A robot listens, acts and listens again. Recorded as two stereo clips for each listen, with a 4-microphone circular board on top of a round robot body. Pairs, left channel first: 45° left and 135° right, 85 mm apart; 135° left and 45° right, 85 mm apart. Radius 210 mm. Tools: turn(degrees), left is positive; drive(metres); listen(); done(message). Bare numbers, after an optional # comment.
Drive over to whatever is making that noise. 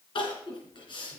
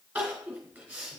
# The crying: 30° left.
turn(30)
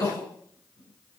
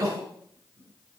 drive(1.0)
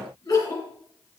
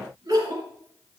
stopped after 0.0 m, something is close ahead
done("Blocked. The crying is further on, straight ahead.")